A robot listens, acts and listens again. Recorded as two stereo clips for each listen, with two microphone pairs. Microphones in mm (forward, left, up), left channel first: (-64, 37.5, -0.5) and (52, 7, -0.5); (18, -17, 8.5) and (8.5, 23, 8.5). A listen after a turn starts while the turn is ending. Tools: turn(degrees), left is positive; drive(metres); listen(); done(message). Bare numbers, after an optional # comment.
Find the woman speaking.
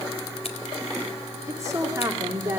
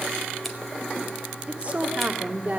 # The woman speaking: 55° left.
turn(55)
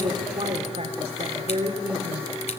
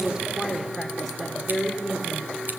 # The woman speaking is now 10° left.
turn(10)
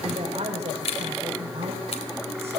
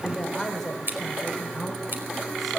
# The woman speaking is now 10° left.
turn(10)
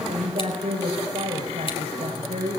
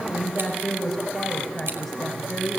done("Facing the woman speaking.")